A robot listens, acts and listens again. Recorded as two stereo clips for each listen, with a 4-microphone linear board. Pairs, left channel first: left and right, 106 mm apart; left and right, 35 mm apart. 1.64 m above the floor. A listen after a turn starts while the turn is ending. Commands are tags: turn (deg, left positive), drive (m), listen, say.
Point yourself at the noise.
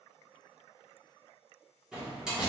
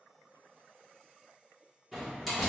<turn deg="-30"/>
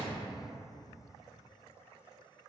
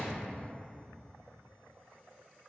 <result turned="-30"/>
<listen/>
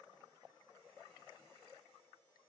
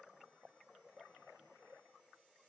<say>I heard a door slam, but can't make it out now. It was about 20° left or 140° right.</say>